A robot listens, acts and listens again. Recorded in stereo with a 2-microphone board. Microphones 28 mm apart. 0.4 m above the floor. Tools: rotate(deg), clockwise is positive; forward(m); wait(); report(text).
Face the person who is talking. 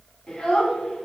rotate(-30)
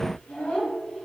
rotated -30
rotate(-135)
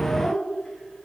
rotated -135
rotate(-30)
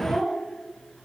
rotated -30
rotate(-15)
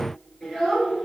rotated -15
rotate(-10)
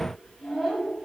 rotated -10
report("Facing the child speaking, over 4 m away.")